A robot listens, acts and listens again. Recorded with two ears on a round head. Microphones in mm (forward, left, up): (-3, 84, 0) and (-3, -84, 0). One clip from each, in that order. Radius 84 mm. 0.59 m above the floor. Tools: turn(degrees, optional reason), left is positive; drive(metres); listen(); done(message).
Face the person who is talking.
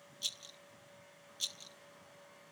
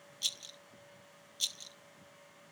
listen()
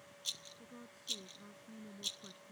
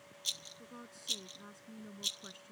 turn(degrees=-60, reason="The woman speaking: about 60° right or 120° right.")
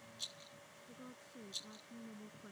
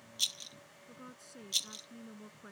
turn(degrees=-55, reason="So it is at 55° right.")
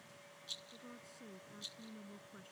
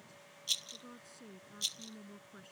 turn(degrees=-10, reason="The woman speaking is now 10° right.")
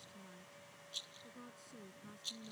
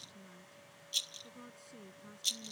done("Found it: a woman speaking, straight ahead.")